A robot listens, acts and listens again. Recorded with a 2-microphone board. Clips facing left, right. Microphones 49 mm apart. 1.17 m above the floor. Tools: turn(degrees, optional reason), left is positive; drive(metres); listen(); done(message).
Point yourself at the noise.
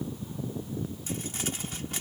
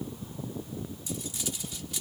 turn(degrees=45, reason="The crumpling: about 45° left or 135° left.")
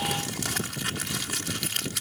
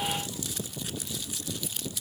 turn(degrees=85, reason="So it is at 85° left.")
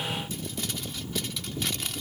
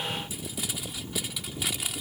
turn(degrees=-10, reason="The crumpling is now 10° right.")
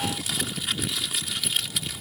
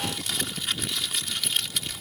done("Found it: crumpling, straight ahead.")